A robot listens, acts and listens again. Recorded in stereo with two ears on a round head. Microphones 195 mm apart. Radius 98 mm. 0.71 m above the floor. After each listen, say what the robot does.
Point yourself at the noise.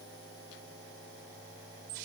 Keep listening.
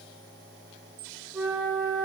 Turn 30° right.
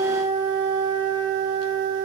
Turn 25° left.
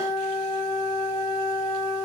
Turn 15° left.
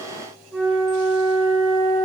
Found it: a flute, straight ahead, 1 to 2 m away.